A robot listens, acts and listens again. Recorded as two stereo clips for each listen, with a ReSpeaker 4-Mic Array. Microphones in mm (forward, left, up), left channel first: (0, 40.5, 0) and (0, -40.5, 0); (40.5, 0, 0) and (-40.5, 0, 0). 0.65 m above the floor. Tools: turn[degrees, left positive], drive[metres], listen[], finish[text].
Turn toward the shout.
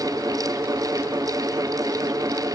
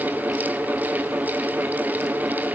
Action: listen[]
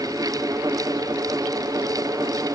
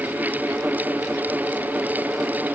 Action: listen[]
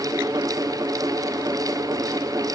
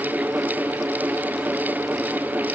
Action: finish[I can't make out a shout.]